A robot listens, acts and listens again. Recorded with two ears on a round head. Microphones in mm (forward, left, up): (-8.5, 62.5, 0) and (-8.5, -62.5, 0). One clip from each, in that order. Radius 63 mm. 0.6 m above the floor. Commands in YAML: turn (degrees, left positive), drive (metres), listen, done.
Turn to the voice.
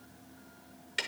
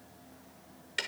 listen: true
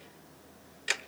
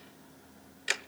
listen: true
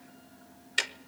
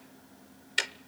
done: "I can't make out anyone speaking, only ticking."